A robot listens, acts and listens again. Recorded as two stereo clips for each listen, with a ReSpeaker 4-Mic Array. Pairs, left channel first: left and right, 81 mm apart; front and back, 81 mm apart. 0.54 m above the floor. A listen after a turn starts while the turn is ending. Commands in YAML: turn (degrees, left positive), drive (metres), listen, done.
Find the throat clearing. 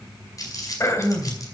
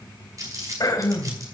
turn: 40
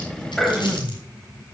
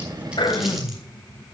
done: "Facing the throat clearing, 1 to 2 m away."